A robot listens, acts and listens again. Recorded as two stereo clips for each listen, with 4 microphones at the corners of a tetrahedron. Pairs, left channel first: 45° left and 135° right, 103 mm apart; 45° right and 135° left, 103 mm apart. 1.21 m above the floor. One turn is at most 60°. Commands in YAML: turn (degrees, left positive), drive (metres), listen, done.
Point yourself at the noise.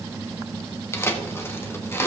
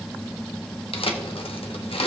turn: -20
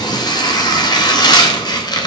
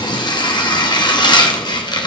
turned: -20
done: "Found it: tearing paper, straight ahead."